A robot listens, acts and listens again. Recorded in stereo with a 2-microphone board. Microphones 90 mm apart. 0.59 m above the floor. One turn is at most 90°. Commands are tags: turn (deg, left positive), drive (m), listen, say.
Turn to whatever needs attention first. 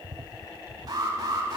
<turn deg="-45"/>
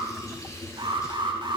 <turn deg="-85"/>
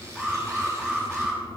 <say>Facing the alarm.</say>